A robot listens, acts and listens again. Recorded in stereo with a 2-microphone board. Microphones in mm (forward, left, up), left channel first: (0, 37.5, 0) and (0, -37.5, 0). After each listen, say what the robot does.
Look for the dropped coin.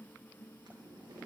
Keep listening.
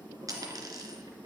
Turn 50° right.
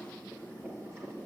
Keep listening.
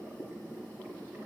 I heard a dropped coin, but can't make it out now. It was about straight ahead or 80° right.